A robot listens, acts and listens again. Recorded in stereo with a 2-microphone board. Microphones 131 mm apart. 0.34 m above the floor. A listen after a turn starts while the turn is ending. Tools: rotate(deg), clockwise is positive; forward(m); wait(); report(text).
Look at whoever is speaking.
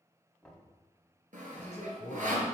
rotate(-60)
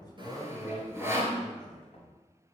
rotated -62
rotate(-10)
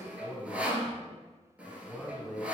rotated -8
report("Facing the man speaking, 2 to 4 m away.")